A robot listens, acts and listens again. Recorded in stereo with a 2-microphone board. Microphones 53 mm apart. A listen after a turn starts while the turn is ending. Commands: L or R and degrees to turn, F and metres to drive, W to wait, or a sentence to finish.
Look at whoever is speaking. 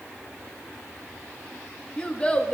L20
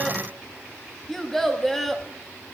Facing the child speaking.